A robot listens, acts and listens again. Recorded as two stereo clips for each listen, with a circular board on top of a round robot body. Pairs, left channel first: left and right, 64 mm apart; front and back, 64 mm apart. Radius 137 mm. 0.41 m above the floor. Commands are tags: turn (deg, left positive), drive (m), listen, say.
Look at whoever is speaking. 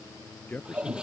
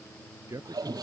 <turn deg="155"/>
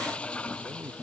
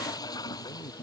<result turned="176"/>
<turn deg="-20"/>
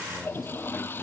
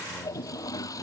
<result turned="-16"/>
<listen/>
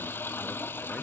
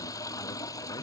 <say>I heard a man speaking from this way, but can't make it out now.</say>